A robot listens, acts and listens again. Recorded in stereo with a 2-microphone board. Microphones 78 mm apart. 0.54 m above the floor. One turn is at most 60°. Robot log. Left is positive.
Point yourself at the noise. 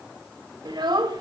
note: The child speaking: about 75° right or 105° right.
cmd yaw -60
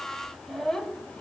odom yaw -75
note: So it is at 10° left.
cmd yaw +10
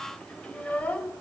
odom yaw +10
note: The child speaking is now 20° left.
cmd yaw +20
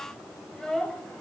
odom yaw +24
note: The child speaking is now 10° left.
cmd yaw +10
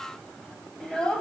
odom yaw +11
note: The child speaking is now 10° left.
cmd yaw +10
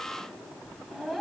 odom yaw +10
end: Facing the child speaking, 2 to 4 m away.